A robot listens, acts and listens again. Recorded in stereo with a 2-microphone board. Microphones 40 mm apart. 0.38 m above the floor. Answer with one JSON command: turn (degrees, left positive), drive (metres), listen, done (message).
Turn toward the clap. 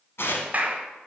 {"turn": -40}
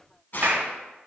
{"turn": -85}
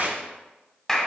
{"turn": 15}
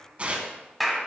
{"done": "Facing the clap, 1 to 2 m away."}